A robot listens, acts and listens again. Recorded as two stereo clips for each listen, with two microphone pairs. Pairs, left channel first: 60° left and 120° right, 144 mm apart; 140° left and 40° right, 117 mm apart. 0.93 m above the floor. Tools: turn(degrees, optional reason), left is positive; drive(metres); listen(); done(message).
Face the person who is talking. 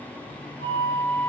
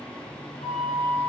listen()
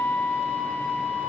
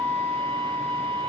listen()
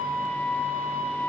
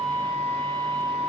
done("I can't make out anyone speaking, only a flute.")